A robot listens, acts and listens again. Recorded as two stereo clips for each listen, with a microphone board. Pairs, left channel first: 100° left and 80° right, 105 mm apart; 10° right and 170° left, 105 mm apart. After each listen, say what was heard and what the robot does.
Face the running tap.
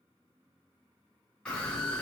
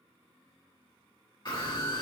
The running tap: 140° left. Turn 140° left.
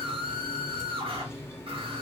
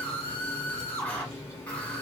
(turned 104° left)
The running tap is now 40° left. Turn 40° left.
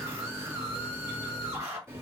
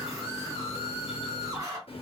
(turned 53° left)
The running tap is now 15° right. Turn 15° right.
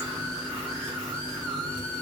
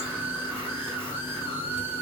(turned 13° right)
Found it: a running tap, straight ahead.